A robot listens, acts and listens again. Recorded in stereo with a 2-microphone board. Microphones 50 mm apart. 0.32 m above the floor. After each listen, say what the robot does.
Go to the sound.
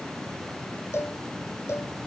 Turn 55° left.
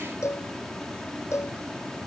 Turn 70° left.
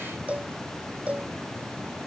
Turn 25° right.
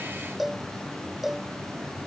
Drive 1.0 m forward.
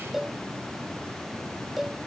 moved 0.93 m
Drive 1.0 m forward.
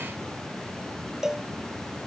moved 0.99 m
Turn 10° right.
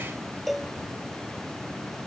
Drive 1.0 m forward.
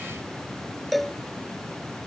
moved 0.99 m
Drive 1.0 m forward.
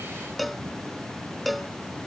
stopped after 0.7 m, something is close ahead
Arrived at the cowbell, straight ahead.